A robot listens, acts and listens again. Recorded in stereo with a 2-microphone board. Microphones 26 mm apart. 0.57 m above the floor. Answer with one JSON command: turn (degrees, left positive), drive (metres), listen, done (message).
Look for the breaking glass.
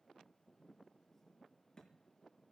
{"listen": true}
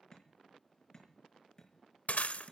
{"turn": 90}
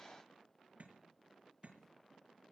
{"done": "I heard breaking glass from this way, but can't make it out now."}